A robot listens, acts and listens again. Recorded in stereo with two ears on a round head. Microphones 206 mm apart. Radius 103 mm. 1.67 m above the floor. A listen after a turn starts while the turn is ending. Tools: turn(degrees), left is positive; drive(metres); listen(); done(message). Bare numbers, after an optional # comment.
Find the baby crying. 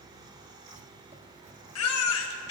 # The baby crying: about 70° left or 110° left.
turn(70)
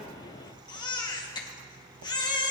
# So it is at 20° left.
turn(20)
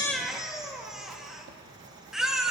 done("Found it: a baby crying, straight ahead.")